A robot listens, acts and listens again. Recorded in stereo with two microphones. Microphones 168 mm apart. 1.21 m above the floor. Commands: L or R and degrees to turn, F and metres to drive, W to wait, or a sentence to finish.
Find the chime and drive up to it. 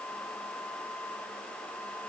W
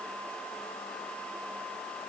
W
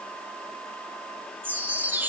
R30
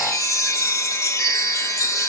L20
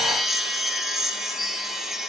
F1.0
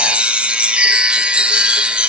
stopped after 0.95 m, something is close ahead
I am next to the chime.